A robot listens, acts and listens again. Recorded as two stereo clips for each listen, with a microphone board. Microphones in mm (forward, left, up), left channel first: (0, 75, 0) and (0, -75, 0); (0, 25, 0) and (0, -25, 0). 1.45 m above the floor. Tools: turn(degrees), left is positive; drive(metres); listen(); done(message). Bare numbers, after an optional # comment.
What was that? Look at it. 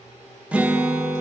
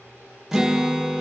turn(-30)
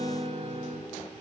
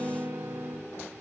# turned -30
# So it is at 140° right.
turn(-140)
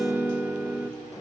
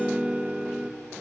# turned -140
# The guitar is now 15° right.
turn(-15)
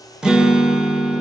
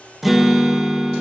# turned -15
done("Facing the guitar.")